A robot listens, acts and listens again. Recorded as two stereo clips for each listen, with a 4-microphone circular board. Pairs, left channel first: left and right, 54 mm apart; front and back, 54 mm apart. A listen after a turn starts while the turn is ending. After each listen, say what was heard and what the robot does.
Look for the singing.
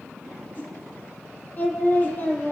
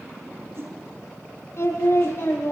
The singing: 35° left. Turn 35° left.
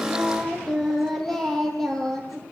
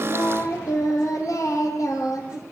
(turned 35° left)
The singing is now 10° left. Turn 10° left.
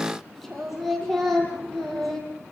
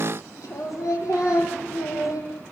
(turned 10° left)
Facing the singing.